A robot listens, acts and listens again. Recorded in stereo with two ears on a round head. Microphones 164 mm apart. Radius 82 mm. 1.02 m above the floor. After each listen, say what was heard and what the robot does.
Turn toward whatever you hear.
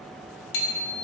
The bicycle bell: about 75° left or 105° left. Turn 75° left.
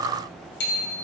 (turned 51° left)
So it is at 55° left. Turn 55° left.
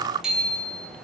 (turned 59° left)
Found it: a bicycle bell, straight ahead, over 4 m away.